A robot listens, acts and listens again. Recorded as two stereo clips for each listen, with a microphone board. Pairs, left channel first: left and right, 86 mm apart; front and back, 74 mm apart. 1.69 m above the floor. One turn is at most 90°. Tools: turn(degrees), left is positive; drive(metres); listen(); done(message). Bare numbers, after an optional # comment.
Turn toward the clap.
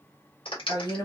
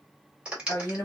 # The clap: 105° left.
turn(90)
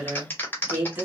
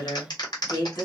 # The clap is now 20° left.
turn(20)
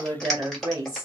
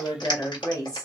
done("Found it: a clap, straight ahead.")